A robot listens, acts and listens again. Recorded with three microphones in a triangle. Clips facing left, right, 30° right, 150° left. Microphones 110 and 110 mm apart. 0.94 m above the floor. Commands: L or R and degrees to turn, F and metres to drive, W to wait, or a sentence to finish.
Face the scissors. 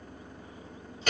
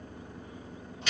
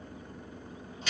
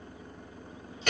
W
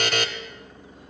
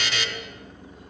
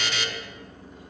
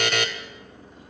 W
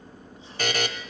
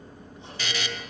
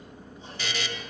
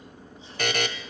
I can't make out scissors to turn to.